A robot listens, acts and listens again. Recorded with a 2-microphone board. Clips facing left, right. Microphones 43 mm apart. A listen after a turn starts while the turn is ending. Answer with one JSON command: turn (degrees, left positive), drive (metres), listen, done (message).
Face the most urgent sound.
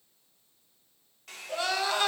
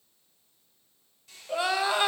{"turn": -15}
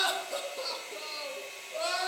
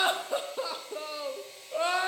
{"turn": -150}
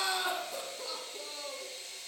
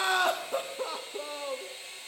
{"turn": -55}
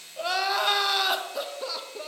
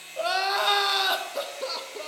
{"done": "Facing the crying."}